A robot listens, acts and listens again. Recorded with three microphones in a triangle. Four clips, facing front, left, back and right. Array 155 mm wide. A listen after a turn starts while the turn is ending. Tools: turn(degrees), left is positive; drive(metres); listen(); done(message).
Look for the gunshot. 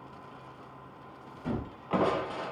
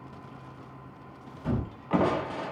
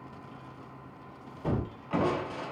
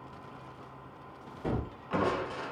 turn(degrees=-125)
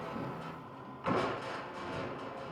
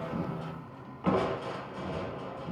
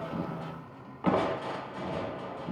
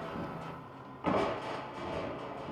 done("I heard a gunshot from this way, but can't make it out now.")